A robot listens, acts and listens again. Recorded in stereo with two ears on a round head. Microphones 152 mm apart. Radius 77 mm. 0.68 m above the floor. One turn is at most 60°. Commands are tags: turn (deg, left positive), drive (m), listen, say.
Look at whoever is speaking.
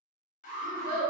<turn deg="-55"/>
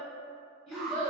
<say>Found it: a child speaking, straight ahead, 1 to 2 m away.</say>